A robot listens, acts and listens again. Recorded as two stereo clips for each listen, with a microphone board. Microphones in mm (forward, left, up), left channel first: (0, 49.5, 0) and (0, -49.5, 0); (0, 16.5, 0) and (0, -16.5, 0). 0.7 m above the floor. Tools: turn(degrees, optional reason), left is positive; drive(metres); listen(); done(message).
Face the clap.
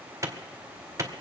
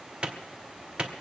turn(degrees=-30, reason="The clap: about 30° right or 150° right.")
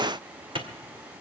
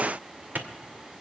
turn(degrees=-115, reason="So it is at 115° right.")
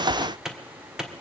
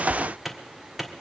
done("Facing the clap.")